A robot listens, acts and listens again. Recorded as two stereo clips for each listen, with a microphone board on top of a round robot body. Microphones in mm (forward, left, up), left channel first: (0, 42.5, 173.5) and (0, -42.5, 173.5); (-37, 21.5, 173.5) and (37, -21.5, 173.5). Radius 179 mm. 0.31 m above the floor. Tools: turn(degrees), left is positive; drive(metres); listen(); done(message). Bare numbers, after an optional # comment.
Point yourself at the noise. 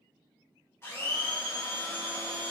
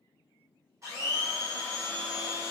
# The blender: 25° left.
turn(25)
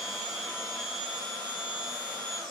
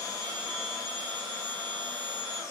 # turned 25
done("Facing the blender, 1 to 2 m away.")